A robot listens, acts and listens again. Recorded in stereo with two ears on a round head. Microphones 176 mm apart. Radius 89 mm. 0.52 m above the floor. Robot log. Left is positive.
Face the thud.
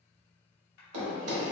cmd yaw -90
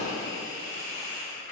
end: Facing where the thud came from. I can't hear it now.